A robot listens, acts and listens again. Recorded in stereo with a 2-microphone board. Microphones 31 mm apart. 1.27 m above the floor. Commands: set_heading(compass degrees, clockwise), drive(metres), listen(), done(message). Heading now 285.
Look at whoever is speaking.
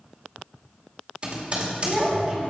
set_heading(315)
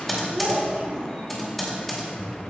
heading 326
set_heading(91)
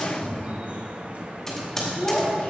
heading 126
set_heading(91)
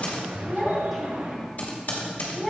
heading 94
done("Found it: a child speaking, straight ahead, 2 to 4 m away.")